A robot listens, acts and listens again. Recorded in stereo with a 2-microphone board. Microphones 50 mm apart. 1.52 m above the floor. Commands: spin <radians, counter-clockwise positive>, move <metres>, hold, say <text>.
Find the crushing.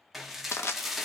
spin 1.05
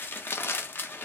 spin 1.05
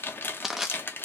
say Facing the crushing.